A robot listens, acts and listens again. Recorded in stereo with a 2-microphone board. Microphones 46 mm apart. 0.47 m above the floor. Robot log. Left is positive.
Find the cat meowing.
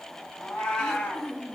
note: The cat meowing: about 35° left or 145° left.
cmd yaw +35
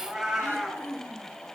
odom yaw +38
end: Facing the cat meowing.